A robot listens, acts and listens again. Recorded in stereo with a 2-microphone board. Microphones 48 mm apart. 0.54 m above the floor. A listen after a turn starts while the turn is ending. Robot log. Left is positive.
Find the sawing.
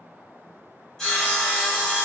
cmd yaw +30
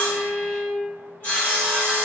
note: So it is at 135° left.
cmd yaw +135
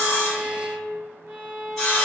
note: The sawing is now 10° left.
cmd yaw +10
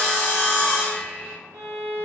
end: Found it: sawing, straight ahead, 1 to 2 m away.